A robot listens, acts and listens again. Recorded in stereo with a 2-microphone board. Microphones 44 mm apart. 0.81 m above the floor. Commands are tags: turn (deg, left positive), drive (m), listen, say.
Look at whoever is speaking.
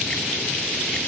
<listen/>
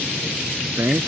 <turn deg="-90"/>
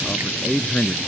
<turn deg="10"/>
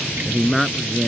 <say>Facing the man speaking.</say>